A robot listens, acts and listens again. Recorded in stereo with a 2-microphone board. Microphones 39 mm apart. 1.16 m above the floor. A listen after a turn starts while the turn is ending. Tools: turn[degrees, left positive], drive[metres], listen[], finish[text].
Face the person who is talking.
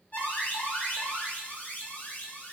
Action: listen[]
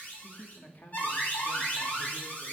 Thought: The man speaking: about 45° left or 135° left.
Action: turn[45]
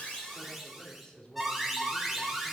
Thought: So it is at 20° left.
Action: turn[20]
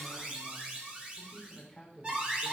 Action: finish[Found it: a man speaking, straight ahead.]